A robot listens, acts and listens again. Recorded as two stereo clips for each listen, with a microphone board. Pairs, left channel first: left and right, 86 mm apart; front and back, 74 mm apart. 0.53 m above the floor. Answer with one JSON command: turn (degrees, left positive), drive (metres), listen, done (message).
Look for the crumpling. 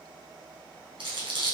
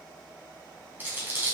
{"turn": -115}
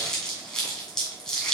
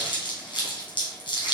{"done": "Found it: crumpling, straight ahead, 2 to 4 m away."}